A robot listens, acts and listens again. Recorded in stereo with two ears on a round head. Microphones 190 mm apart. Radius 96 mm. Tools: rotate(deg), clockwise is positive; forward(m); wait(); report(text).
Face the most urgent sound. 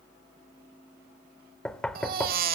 rotate(45)
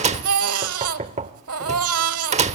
rotate(90)
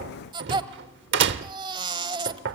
rotate(20)
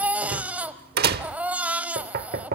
report("Facing the baby crying.")